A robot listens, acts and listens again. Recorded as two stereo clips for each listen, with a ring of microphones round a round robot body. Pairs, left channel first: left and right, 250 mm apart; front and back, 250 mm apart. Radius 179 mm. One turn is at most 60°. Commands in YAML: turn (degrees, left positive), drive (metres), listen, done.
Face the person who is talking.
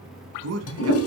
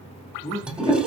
turn: -60
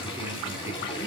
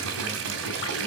turn: -20
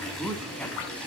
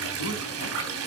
done: "Found it: a man speaking, straight ahead, 2 to 4 m away."